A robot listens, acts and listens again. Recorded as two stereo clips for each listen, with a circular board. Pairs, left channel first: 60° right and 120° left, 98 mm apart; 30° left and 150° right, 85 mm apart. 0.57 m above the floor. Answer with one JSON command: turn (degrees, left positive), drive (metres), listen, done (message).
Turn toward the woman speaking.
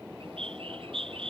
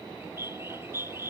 {"listen": true}
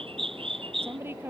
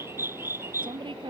{"turn": -175}
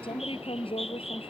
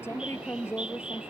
{"turn": -30}
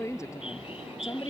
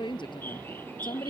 {"done": "Found it: a woman speaking, straight ahead."}